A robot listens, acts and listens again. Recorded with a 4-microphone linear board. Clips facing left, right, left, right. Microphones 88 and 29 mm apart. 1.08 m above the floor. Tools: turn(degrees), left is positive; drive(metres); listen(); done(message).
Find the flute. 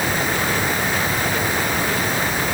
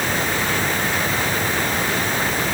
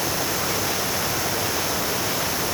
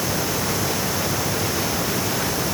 listen()
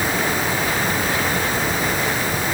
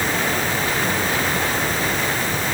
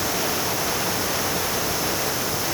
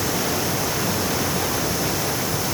listen()
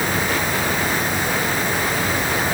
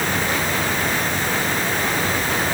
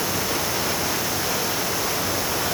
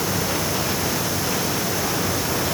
done("I can't make out a flute to turn to.")